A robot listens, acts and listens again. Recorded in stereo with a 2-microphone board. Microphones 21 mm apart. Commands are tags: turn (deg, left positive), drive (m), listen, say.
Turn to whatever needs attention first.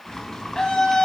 <turn deg="30"/>
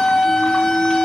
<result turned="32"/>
<turn deg="115"/>
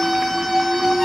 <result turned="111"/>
<turn deg="10"/>
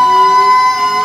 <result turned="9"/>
<say>Facing the scream.</say>